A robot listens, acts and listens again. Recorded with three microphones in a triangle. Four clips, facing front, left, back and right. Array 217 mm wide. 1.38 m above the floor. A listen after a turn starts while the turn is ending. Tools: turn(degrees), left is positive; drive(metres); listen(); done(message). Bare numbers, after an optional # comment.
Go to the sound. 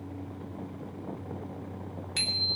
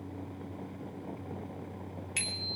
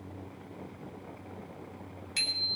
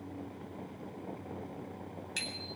# The bicycle bell: 20° left.
turn(20)
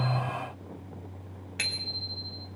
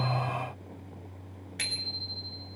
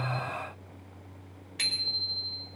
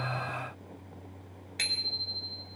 drive(1.0)
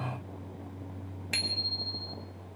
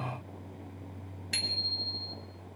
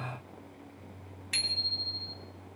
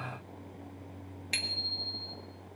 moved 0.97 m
# The bicycle bell is now 10° right.
turn(-10)
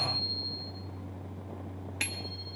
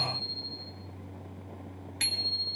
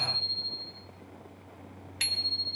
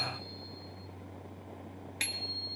drive(1.0)
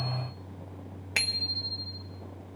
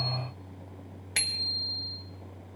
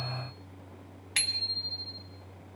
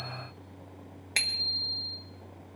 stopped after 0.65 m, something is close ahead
done("I am next to the bicycle bell.")